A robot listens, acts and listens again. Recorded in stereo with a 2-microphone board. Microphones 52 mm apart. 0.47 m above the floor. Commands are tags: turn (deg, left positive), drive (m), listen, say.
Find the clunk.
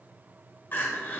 <listen/>
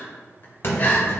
<turn deg="50"/>
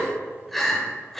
<listen/>
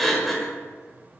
<say>I heard a clunk, but can't make it out now. It was about straight ahead or 80° left.</say>